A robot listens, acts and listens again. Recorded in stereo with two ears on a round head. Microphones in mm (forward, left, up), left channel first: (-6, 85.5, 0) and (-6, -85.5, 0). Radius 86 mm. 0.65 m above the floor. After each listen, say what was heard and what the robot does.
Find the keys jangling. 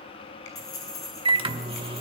The keys jangling: about 20° left or 160° left. Turn 20° left.
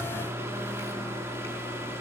Keep listening.
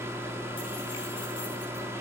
Keep listening.
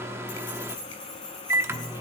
The keys jangling: about 25° left or 155° left. Turn 25° left.
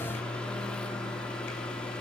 Keep listening.
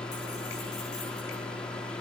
Keep listening.
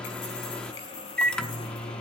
I heard keys jangling, but can't make it out now. It was about straight ahead or 130° left.